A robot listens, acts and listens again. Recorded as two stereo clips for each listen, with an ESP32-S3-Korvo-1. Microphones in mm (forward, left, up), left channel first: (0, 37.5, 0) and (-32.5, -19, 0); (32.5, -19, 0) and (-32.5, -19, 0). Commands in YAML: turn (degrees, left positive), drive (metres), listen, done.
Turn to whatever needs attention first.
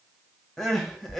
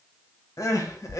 turn: -25
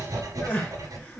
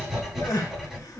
listen: true
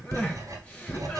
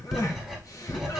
listen: true
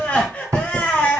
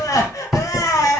done: "Found it: crying, straight ahead."